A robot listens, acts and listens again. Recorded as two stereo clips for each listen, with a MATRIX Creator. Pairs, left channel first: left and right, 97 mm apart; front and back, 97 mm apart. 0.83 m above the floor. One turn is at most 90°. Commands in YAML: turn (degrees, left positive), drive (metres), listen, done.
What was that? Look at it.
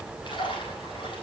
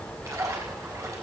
turn: 90
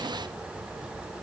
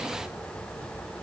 turn: 35
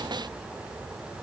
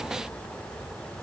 done: "I heard a splash from this way, but can't make it out now."